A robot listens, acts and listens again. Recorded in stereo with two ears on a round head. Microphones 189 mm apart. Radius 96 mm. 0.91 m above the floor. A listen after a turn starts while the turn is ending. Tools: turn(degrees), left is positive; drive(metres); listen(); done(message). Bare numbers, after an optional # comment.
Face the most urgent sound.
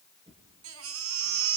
# The baby crying: about 70° right or 110° right.
turn(-70)
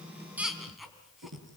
done("Facing the baby crying, 2 to 4 m away.")